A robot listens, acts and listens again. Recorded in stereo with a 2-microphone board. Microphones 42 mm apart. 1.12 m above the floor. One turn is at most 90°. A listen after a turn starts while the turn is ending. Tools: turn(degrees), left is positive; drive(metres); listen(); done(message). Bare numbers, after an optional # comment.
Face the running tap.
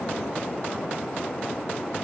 listen()
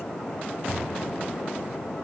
listen()
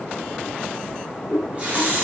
# The running tap: about 35° right or 145° right.
turn(-35)
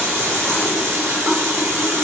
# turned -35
# So it is at 110° right.
turn(-90)
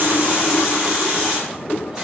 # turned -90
# The running tap is now 15° right.
turn(-15)
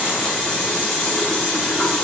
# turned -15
done("Facing the running tap.")